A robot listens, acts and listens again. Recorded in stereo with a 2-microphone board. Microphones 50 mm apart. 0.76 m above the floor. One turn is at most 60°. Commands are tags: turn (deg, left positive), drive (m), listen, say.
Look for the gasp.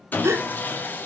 <turn deg="-60"/>
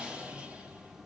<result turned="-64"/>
<listen/>
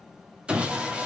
<say>I heard a gasp, but can't make it out now. It was about 5° right or 45° right.</say>